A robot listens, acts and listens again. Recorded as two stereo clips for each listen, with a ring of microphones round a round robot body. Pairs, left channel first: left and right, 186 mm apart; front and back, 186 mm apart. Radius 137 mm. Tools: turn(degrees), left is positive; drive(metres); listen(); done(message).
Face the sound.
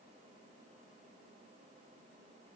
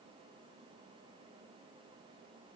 listen()
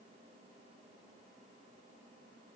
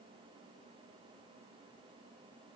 listen()
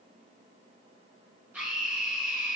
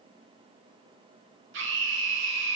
turn(degrees=-175)
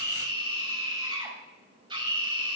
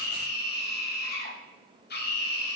turn(degrees=-25)
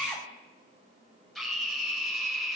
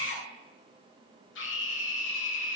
done("Facing the scream.")